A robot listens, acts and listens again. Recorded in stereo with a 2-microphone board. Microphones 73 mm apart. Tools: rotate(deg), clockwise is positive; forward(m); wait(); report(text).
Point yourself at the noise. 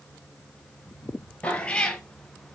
rotate(-30)
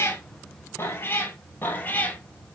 rotate(-25)
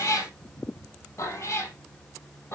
rotate(-140)
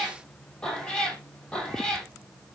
rotate(-10)
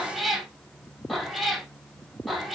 report("Facing the cat meowing.")